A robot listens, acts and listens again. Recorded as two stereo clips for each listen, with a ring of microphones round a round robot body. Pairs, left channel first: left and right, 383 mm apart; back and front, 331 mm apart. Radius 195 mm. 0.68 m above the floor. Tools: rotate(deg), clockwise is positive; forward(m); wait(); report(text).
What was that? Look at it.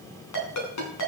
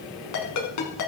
rotate(-140)
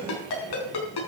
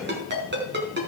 rotate(-60)
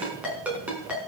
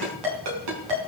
report("Found it: a ringtone, straight ahead.")